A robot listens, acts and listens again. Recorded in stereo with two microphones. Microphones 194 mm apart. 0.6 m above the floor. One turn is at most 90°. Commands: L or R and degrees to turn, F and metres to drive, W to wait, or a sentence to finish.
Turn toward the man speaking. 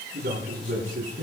R50
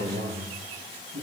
R80
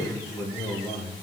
Facing the man speaking, over 4 m away.